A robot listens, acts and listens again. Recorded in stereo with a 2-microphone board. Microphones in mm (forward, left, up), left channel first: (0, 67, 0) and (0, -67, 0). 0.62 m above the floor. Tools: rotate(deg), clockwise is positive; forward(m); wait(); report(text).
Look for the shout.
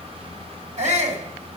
rotate(60)
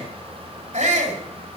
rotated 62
rotate(60)
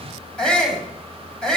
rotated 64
report("Facing the shout, 2 to 4 m away.")